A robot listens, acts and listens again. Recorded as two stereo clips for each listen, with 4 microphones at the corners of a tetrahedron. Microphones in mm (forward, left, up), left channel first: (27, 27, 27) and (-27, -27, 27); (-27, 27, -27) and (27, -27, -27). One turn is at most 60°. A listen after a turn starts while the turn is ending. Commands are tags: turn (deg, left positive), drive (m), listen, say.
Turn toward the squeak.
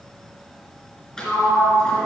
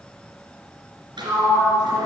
<listen/>
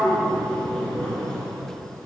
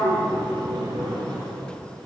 <listen/>
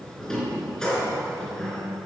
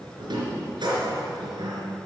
<say>I can't make out a squeak to turn to.</say>